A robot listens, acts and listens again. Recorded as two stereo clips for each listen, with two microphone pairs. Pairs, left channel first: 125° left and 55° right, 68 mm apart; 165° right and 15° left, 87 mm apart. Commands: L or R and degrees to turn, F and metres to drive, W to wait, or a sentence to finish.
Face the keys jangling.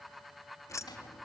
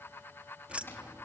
L90
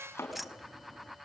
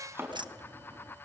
L35
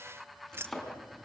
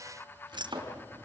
Found it: keys jangling, straight ahead.